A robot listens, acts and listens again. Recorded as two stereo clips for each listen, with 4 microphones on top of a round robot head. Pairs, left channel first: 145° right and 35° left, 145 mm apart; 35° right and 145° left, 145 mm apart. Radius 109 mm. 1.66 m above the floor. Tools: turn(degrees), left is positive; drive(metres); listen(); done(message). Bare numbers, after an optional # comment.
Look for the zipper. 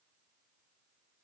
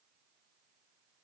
listen()
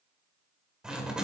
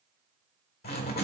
# The zipper: 50° right.
turn(-50)
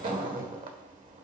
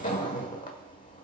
done("Found it: a zipper, straight ahead, 1 to 2 m away.")